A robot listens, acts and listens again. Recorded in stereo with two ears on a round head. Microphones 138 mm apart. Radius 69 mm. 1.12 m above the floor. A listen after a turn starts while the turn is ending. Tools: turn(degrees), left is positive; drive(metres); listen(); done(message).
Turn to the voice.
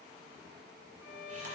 listen()
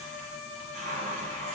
listen()
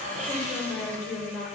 turn(degrees=30)
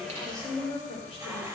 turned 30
turn(degrees=140)
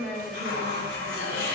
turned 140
listen()
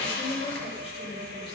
turn(degrees=40)
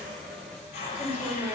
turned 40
turn(degrees=-15)
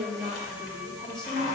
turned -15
done("Found it: a woman speaking, straight ahead, 2 to 4 m away.")